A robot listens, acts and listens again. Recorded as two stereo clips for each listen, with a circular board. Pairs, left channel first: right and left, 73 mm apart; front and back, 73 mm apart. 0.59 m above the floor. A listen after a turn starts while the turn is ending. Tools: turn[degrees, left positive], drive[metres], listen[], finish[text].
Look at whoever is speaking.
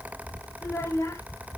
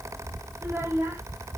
Thought: The child speaking: 130° right.
Action: turn[-130]
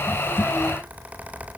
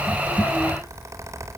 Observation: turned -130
Action: listen[]
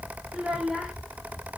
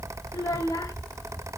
Thought: The child speaking is now 10° left.
Action: turn[10]
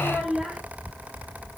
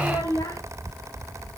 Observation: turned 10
Action: finish[Facing the child speaking.]